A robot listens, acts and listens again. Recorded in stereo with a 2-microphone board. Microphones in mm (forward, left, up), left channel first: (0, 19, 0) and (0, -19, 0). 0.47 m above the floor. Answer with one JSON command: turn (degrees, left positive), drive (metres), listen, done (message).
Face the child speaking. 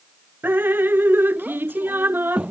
{"turn": -35}
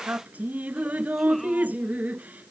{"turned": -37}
{"listen": true}
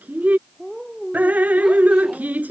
{"done": "Found it: a child speaking, straight ahead."}